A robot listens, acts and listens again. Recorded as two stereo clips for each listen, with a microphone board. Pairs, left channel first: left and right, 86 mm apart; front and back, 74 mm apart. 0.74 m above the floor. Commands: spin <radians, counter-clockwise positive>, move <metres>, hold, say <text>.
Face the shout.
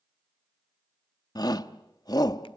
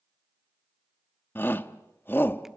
spin 1.05
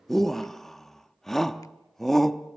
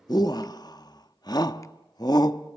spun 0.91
say Facing the shout.